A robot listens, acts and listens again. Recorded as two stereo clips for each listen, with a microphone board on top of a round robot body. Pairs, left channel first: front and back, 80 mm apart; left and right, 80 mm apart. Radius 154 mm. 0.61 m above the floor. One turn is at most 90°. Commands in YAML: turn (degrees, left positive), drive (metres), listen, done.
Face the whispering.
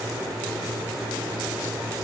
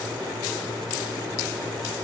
listen: true
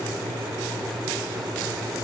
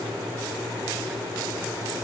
listen: true
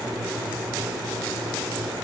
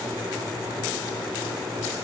done: "I can't make out whispering."